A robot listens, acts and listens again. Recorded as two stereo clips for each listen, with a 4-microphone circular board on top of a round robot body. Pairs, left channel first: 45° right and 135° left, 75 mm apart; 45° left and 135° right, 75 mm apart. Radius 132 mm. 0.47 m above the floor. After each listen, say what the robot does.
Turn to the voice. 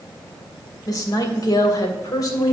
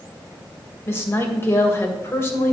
Turn 10° right.
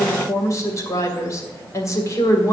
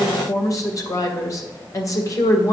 Found it: a woman speaking, straight ahead.